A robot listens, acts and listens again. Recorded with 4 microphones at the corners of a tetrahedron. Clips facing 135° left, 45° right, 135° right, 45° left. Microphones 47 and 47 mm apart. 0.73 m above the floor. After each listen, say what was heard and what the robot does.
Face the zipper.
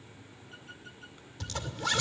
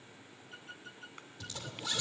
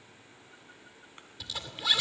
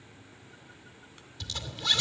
The zipper: 145° left. Turn 145° left.
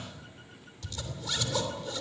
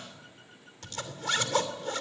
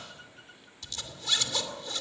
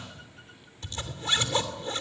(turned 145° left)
The zipper is now 10° right. Turn 10° right.
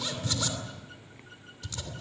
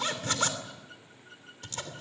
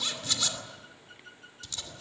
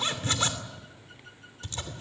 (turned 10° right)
Found it: a zipper, straight ahead, 2 to 4 m away.